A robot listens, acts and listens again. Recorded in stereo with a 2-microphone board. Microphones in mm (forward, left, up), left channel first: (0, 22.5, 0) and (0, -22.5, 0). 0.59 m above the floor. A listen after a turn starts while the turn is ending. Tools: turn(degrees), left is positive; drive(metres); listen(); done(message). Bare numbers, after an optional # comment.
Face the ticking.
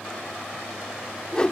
listen()
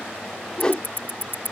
# The ticking: about 55° left or 125° left.
turn(55)
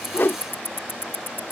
# So it is at 65° left.
turn(65)
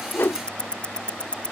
# The ticking is now 25° left.
turn(25)
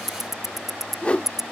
# The ticking is now 10° right.
turn(-10)
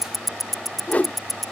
done("Found it: ticking, straight ahead.")